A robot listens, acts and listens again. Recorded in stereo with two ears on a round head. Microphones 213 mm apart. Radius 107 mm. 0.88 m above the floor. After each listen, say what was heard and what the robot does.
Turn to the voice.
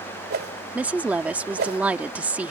Turn 30° right.
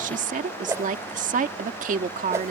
So it is at 145° right. Turn 145° right.
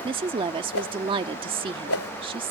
The woman speaking is now 25° right. Turn 25° right.
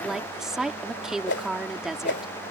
Facing the woman speaking.